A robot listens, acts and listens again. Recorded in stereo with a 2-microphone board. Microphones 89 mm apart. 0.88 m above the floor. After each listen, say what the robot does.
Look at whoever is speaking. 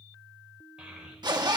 Turn 30° right.
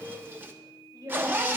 Turn 135° right.
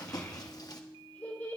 Turn 20° left.
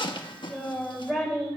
Found it: a child speaking, straight ahead, 2 to 4 m away.